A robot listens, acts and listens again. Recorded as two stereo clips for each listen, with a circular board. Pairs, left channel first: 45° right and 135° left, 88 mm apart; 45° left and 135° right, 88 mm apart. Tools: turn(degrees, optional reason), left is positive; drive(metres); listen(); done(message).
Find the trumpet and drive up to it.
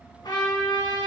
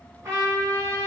turn(degrees=-80, reason="The trumpet: 80° right.")
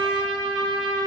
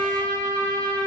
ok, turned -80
turn(degrees=-20, reason="The trumpet is now 20° right.")
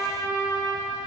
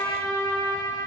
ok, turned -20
drive(metres=1.0)
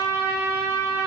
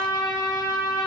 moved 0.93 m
drive(metres=1.0)
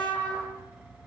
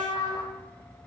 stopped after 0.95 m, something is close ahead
turn(degrees=20, reason="The trumpet is now 20° left.")
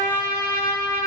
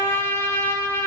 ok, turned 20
done("Arrived at the trumpet, straight ahead.")